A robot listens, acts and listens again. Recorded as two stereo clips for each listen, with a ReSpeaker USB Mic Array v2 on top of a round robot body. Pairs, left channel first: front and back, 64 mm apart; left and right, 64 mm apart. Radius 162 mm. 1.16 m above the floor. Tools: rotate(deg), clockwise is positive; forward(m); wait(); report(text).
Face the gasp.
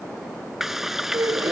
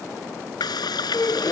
rotate(-145)
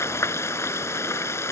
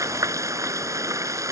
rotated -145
report("I heard a gasp from this way, but can't make it out now.")